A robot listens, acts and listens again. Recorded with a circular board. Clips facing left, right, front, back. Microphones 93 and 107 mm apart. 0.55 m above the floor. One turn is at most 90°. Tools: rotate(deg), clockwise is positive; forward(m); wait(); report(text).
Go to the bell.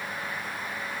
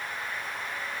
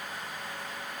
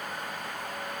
wait()
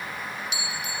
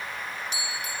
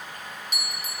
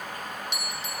rotate(40)
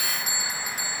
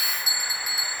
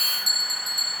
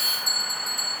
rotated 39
forward(1.0)
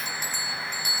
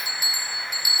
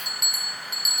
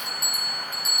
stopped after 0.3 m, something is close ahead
rotate(10)
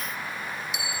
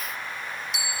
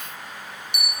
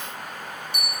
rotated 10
report("Blocked. The bell is further on, straight ahead.")